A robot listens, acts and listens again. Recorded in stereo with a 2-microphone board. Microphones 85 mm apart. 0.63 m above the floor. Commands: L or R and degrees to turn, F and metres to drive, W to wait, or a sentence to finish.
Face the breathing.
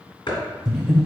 L30
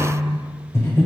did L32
L145
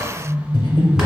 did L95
L55
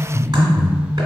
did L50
Found it: breathing, straight ahead.